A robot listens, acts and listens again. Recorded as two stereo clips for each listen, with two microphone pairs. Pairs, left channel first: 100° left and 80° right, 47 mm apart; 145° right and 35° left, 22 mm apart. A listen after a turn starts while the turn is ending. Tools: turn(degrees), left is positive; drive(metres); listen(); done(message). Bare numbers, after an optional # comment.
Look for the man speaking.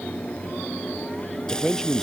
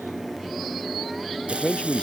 # The man speaking: 175° right.
turn(-175)
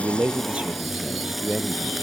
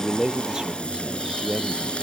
# The man speaking is now 20° right.
turn(-20)
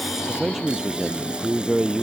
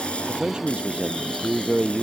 done("Facing the man speaking.")